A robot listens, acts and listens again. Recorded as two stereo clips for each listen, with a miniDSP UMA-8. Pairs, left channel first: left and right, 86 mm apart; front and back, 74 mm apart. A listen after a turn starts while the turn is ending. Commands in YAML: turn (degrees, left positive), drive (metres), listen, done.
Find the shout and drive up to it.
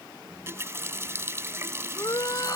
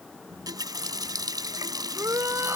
turn: 130
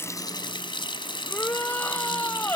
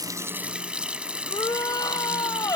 turn: 25
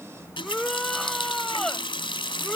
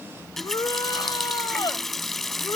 drive: 1.0
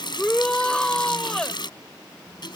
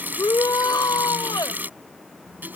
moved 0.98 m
turn: 10
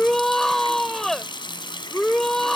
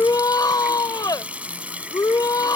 drive: 1.0
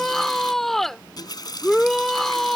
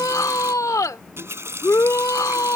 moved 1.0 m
drive: 1.0
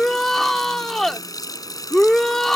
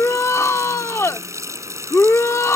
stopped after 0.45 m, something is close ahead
done: "I am next to the shout."